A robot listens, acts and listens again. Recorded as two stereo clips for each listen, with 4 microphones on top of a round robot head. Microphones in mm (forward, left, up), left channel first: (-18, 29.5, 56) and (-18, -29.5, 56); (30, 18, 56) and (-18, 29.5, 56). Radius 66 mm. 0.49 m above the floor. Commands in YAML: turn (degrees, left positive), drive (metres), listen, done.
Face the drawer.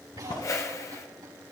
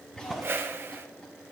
turn: 75
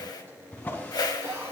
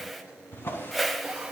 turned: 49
turn: 25
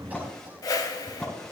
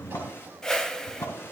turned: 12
turn: 10
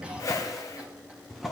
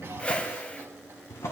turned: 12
done: "Facing the drawer, 2 to 4 m away."